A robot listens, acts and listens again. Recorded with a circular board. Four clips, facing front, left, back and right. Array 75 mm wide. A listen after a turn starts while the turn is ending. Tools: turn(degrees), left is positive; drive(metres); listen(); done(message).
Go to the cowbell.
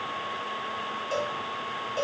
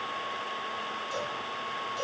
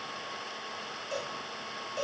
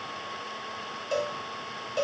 turn(degrees=-60)
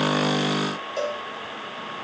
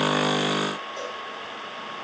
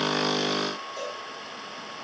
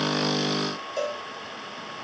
turn(degrees=-35)
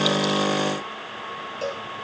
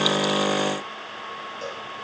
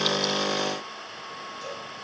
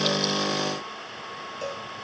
drive(metres=1.0)
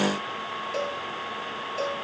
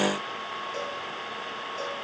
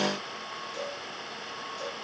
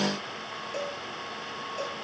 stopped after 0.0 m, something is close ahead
done("Something is in my way. I am facing the cowbell but have not reached it.")